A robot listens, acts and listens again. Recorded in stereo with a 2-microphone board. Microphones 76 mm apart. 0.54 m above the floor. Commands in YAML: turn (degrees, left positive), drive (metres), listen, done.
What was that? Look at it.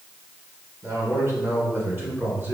turn: -30
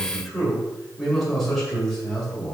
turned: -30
turn: 10
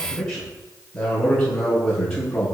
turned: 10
turn: 10
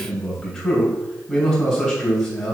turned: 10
done: "Facing the man speaking."